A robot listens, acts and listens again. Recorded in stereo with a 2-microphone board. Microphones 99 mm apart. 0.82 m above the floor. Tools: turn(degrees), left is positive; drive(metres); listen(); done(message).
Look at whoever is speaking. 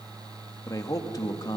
turn(degrees=40)
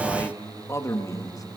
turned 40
turn(degrees=35)
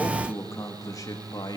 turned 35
turn(degrees=35)
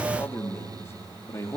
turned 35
turn(degrees=30)
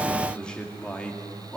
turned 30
turn(degrees=10)
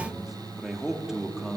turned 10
done("Found it: a man speaking, straight ahead.")